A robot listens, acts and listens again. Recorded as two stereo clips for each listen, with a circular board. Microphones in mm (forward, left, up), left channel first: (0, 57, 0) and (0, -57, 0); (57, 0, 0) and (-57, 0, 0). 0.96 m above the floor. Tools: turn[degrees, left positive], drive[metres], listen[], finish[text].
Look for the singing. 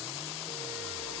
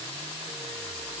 Action: listen[]
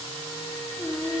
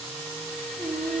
Thought: The singing: 155° right.
Action: turn[-155]
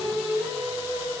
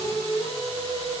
Thought: The singing is now 25° right.
Action: turn[-25]
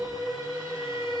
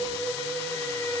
Thought: The singing is now 20° right.
Action: turn[-20]
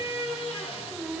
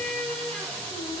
Action: finish[Found it: singing, straight ahead.]